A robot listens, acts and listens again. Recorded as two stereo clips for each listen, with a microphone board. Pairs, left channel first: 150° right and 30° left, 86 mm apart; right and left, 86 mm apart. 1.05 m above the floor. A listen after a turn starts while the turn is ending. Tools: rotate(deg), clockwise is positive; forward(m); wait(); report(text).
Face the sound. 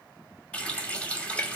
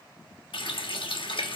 rotate(70)
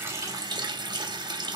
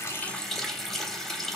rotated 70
report("Facing the running tap, under 1 m away.")